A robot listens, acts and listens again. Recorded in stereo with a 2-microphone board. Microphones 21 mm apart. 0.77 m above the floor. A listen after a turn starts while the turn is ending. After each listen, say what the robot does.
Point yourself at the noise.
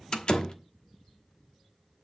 Turn 40° left.
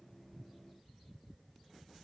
Keep listening.
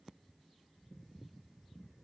I heard a door slam, but can't make it out now. It was about straight ahead or 100° left.